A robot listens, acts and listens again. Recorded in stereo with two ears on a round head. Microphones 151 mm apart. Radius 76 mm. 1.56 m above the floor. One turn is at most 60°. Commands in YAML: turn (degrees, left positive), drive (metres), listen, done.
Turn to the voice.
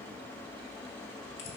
listen: true
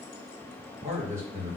turn: -15
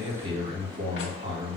turn: -60
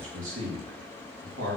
turn: -60
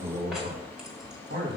turn: -50
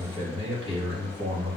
turn: -30
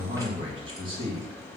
turn: -30
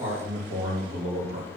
turn: -20
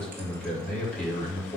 done: "Found it: a man speaking, straight ahead."